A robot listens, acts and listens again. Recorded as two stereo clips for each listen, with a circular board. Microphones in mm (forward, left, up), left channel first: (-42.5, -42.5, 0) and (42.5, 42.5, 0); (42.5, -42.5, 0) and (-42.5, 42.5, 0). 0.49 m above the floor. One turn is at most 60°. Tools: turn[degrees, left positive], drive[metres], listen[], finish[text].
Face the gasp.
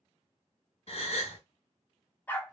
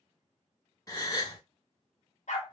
Thought: The gasp: 105° right.
Action: turn[-60]
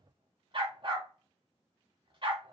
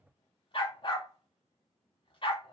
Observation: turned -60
Thought: Nothing new. It was at 45° right.
Action: turn[-45]
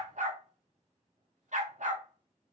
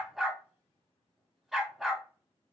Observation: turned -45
Action: finish[I heard a gasp from this way, but can't make it out now.]